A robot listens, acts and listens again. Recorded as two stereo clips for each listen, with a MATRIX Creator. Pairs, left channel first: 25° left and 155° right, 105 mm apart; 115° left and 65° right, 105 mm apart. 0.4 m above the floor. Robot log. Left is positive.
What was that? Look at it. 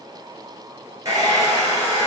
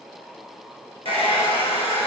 note: The hair dryer: 145° left.
cmd yaw +145
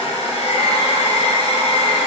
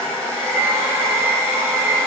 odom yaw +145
end: Found it: a hair dryer, straight ahead, 1 to 2 m away.